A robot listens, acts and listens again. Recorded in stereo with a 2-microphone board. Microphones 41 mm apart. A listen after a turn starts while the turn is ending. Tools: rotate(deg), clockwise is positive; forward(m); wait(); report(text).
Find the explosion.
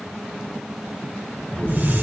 rotate(-25)
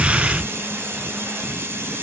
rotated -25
report("Facing the explosion.")